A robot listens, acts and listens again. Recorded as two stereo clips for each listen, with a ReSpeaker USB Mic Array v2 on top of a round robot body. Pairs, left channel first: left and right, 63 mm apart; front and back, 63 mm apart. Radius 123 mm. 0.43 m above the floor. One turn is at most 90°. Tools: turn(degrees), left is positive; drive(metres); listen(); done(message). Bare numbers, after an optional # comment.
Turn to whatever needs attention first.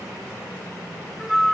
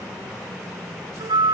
listen()
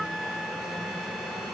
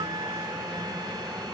listen()
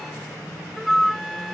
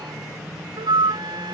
done("I can't make out anything urgent to turn to.")